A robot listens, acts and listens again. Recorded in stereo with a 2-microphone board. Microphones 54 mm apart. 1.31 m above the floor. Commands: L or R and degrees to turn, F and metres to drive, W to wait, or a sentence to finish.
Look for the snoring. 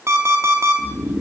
R15
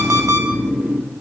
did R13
R155
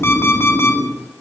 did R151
Facing the snoring, 1 to 2 m away.